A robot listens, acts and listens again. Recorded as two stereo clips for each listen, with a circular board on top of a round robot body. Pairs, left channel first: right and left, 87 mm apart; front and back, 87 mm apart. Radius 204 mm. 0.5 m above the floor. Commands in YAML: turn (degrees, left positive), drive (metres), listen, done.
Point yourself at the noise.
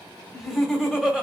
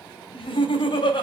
turn: 10
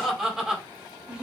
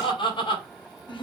turn: 10
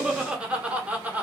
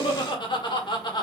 turn: 20
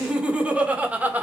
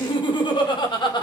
turn: 20
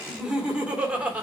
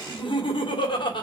turn: 15
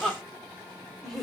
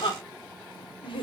done: "Facing the laughter, 2 to 4 m away."